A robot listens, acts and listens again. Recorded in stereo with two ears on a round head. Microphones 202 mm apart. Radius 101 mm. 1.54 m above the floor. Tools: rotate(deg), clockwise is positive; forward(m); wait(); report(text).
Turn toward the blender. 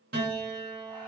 wait()
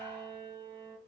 wait()
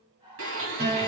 rotate(60)
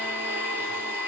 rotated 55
rotate(10)
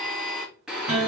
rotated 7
report("Found it: a blender, straight ahead, 1 to 2 m away.")